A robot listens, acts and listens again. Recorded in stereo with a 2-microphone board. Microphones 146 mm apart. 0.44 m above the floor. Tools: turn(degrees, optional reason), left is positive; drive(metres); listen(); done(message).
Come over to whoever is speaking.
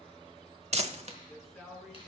turn(degrees=30)
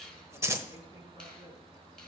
listen()
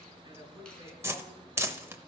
turn(degrees=-30, reason="So it is at 30° right.")
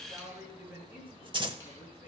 turn(degrees=-15, reason="The man speaking is now 15° right.")
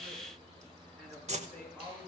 drive(metres=1.0)
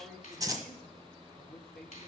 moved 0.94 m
drive(metres=1.0)
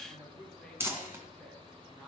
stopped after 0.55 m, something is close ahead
done("Blocked. The man speaking is further on, straight ahead.")